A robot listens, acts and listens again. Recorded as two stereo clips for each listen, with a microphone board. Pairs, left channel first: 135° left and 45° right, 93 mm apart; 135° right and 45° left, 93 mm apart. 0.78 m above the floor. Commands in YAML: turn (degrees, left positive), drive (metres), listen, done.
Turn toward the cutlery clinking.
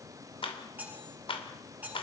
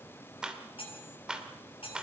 turn: -120
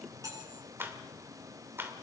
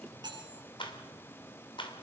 done: "Facing the cutlery clinking, over 4 m away."